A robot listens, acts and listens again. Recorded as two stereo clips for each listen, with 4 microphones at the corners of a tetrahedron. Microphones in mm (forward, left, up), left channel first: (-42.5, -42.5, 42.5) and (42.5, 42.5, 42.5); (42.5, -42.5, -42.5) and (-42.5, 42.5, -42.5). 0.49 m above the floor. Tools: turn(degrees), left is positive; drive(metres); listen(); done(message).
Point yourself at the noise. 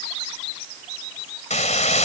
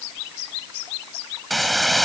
turn(degrees=-135)
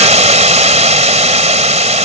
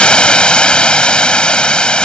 turn(degrees=35)
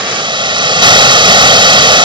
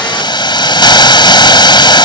done("Facing the hiss.")